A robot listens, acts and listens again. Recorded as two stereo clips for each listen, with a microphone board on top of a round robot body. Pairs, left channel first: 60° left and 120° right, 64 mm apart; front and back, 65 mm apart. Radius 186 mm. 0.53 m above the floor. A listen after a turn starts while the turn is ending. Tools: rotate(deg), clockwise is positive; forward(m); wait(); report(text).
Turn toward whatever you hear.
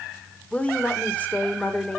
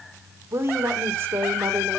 rotate(-125)
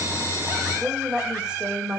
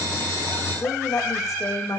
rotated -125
rotate(45)
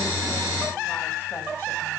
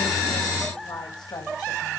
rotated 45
wait()
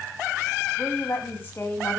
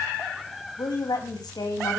report("Found it: a woman speaking, straight ahead, over 4 m away.")